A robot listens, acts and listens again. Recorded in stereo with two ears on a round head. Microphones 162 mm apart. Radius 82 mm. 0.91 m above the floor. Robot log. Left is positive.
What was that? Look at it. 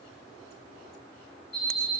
note: The alarm clock: about 30° left or 150° left.
cmd yaw +30
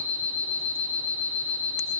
end: Found it: an alarm clock, straight ahead, under 1 m away.